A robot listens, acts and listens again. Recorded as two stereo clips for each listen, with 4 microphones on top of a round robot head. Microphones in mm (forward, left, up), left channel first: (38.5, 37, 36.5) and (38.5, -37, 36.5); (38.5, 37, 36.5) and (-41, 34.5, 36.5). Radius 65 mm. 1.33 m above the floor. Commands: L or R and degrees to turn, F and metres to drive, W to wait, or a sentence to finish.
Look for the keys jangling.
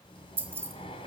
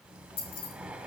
R30
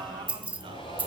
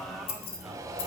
R25
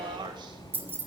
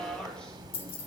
R30
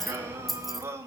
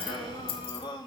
Found it: keys jangling, straight ahead, 1 to 2 m away.